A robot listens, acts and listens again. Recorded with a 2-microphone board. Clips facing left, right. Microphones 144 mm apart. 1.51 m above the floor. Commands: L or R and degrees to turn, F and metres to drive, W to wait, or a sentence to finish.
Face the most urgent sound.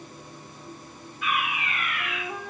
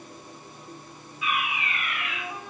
L50
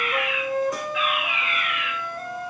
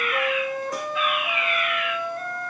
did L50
L80
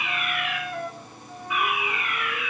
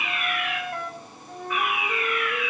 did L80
L10
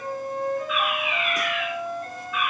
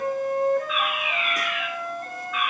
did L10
Facing the fire alarm, over 4 m away.